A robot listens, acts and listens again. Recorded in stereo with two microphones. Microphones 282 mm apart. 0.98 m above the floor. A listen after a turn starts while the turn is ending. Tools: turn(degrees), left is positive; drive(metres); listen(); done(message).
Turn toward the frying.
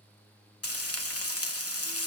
turn(degrees=60)
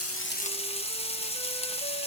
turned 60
turn(degrees=25)
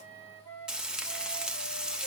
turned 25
done("Found it: frying, straight ahead.")